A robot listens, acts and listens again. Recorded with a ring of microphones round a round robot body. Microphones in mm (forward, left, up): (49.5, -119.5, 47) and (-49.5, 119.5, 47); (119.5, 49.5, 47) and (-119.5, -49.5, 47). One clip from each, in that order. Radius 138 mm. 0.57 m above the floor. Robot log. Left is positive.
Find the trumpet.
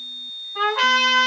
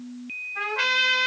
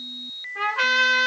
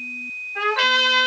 note: The trumpet: 95° right.
cmd yaw -95
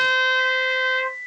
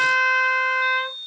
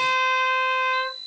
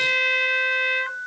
note: The trumpet is now 10° left.
cmd yaw +10
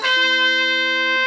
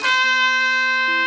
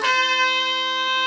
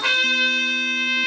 end: Found it: a trumpet, straight ahead, over 4 m away.